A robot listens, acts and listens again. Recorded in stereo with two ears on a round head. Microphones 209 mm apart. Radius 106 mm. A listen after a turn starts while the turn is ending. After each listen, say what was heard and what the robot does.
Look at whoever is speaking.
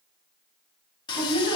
Turn 90° right.
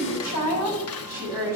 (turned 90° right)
So it is at 10° right. Turn 10° right.
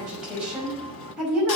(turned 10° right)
Facing the woman speaking.